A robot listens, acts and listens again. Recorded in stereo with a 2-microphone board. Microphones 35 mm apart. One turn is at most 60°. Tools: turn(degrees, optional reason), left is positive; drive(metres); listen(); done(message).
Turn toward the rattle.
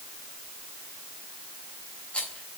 turn(degrees=35, reason="The rattle: about 35° left or 145° left.")
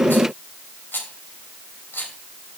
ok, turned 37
turn(degrees=60, reason="So it is at 110° left.")
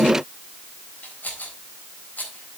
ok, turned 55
turn(degrees=50, reason="The rattle is now 50° left.")
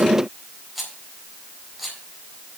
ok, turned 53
done("Facing the rattle.")